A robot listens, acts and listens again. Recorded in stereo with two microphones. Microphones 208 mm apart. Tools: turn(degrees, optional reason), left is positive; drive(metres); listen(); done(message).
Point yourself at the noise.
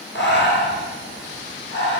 turn(degrees=60, reason="The breathing: about 60° left or 120° left.")
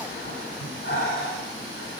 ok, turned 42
turn(degrees=80, reason="So it is at 80° left.")
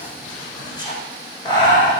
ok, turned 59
turn(degrees=20, reason="The breathing is now 20° left.")
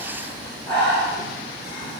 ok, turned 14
done("Found it: breathing, straight ahead, 2 to 4 m away.")